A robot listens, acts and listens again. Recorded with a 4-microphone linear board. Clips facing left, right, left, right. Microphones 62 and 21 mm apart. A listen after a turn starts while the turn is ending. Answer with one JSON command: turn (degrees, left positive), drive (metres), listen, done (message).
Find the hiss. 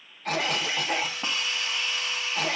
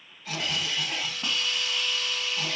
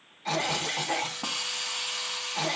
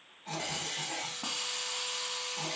{"turn": 25}
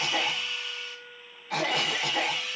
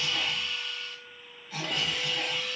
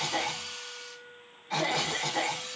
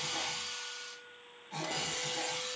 {"done": "Found it: a hiss, straight ahead."}